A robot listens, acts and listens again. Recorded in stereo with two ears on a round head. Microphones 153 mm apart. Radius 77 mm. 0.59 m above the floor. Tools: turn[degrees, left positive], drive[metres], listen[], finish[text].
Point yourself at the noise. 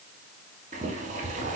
Thought: The boiling: about 45° right or 135° right.
Action: turn[-45]
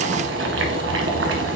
Thought: So it is at 85° right.
Action: turn[-85]
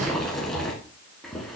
Action: finish[Found it: boiling, straight ahead.]